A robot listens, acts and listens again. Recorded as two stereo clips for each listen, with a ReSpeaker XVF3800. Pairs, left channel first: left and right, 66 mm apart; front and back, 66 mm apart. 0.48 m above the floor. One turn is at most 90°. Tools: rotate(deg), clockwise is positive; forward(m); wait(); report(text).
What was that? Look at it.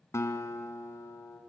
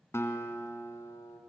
rotate(-45)
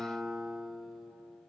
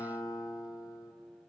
report("Found it: a guitar, straight ahead.")